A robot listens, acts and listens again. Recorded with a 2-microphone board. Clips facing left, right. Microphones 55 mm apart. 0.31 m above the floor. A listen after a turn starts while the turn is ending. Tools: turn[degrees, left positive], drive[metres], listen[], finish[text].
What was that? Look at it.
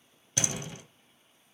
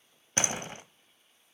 Thought: The door slam: about 40° right or 140° right.
Action: turn[-40]
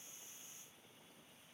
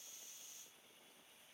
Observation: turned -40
Action: listen[]
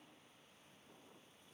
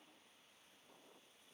Action: finish[I heard a door slam, but can't make it out now. It was about straight ahead or 100° right.]